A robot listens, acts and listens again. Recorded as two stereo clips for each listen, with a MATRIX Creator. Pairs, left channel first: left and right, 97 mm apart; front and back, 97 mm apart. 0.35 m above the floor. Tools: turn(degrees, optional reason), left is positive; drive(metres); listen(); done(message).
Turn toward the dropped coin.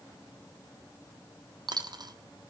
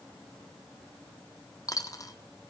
turn(degrees=-50, reason="The dropped coin: 50° right.")
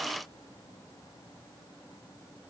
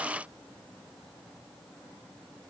done("Facing where the dropped coin came from. I can't hear it now.")